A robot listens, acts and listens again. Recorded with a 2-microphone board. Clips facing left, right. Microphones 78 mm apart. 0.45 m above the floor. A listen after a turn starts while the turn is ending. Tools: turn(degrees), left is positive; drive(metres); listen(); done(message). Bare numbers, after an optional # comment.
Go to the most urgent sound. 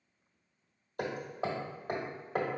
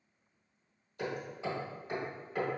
listen()
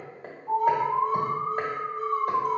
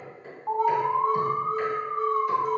# The alarm: about 50° right or 130° right.
turn(-50)
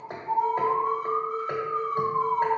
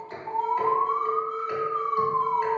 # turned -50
# So it is at 60° right.
turn(-60)
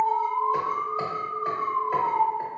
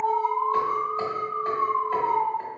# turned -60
# The alarm is now 25° right.
turn(-25)
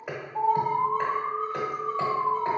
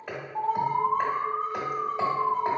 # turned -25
drive(1.0)
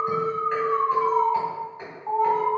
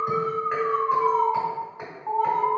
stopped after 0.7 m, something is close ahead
done("Arrived at the alarm, straight ahead.")